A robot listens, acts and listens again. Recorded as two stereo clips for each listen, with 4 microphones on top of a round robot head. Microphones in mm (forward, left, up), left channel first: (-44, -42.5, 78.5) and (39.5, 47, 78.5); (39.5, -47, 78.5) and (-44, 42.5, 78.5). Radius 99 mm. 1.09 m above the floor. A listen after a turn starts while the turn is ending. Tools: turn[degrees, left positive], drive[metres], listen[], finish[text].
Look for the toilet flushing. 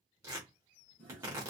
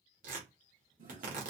Thought: The toilet flushing: 150° left.
Action: turn[150]
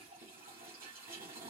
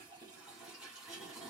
Thought: The toilet flushing is now 50° left.
Action: turn[50]
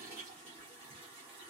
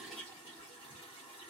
Action: finish[Facing the toilet flushing, 1 to 2 m away.]